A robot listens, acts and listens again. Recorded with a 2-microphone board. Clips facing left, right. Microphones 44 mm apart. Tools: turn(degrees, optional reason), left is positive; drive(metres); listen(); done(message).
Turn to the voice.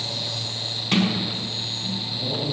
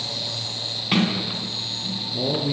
turn(degrees=-65, reason="The man speaking: about 65° right or 115° right.")
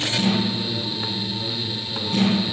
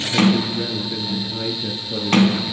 turn(degrees=-45, reason="So it is at 45° right.")
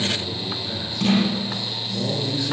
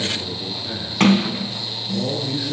turn(degrees=-10, reason="The man speaking is now 10° right.")
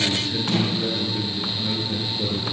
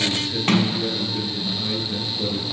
done("Facing the man speaking.")